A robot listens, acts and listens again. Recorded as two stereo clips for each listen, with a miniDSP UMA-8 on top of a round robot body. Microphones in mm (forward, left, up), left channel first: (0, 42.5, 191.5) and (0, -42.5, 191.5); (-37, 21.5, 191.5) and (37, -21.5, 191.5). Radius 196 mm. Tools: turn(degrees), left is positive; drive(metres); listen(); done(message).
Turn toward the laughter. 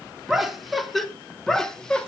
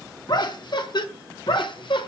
turn(degrees=170)
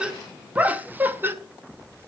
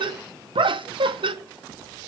turn(degrees=-25)
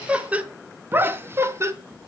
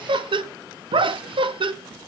turn(degrees=-35)
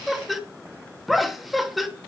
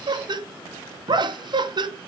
done("Facing the laughter, 2 to 4 m away.")